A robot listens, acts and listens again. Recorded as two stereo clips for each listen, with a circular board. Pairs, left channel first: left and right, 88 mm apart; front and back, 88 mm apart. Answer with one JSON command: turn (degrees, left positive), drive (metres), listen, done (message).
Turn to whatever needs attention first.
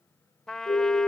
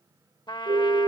{"turn": 145}
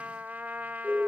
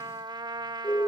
{"turn": -20}
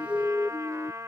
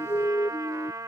{"done": "Found it: a siren, straight ahead."}